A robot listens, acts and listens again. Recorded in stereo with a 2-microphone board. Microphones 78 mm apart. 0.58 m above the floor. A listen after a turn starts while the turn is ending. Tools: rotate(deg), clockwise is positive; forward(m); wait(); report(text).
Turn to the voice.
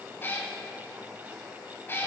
wait()
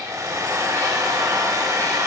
wait()
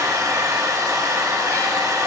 report("I can't make out anyone speaking to turn to.")